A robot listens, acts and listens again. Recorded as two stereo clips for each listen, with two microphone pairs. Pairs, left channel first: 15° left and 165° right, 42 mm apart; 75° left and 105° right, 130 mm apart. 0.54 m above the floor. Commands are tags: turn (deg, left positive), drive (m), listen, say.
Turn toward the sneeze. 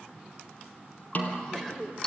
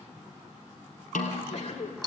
<turn deg="100"/>
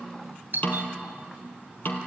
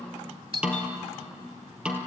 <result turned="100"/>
<say>Facing where the sneeze came from. I can't hear it now.</say>